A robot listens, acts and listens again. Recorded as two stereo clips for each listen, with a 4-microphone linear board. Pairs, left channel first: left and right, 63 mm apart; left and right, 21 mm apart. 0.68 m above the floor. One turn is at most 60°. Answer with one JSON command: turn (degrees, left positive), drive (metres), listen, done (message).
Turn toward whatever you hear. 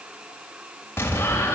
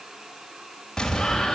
{"turn": 40}
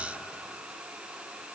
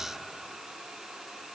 {"listen": true}
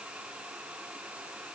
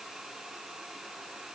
{"done": "I heard an explosion, but can't make it out now. It was about straight ahead or 100° left."}